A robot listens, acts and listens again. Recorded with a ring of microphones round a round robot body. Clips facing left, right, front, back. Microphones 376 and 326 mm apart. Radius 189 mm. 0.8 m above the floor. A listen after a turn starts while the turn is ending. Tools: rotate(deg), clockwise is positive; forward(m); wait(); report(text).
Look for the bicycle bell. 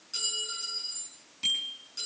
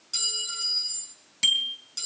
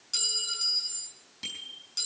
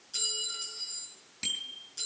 rotate(100)
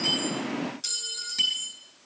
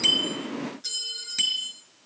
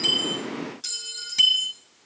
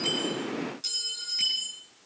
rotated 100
rotate(10)
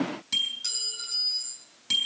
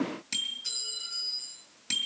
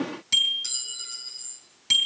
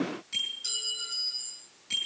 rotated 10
report("Found it: a bicycle bell, straight ahead, 2 to 4 m away.")